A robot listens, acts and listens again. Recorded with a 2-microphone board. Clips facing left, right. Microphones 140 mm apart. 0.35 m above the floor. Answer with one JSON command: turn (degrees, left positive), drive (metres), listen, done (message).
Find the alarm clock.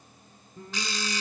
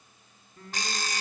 {"turn": -50}
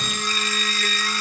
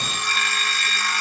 {"turn": -80}
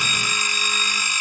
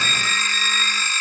{"turn": 15}
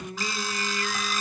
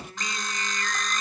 {"done": "Found it: an alarm clock, straight ahead, 1 to 2 m away."}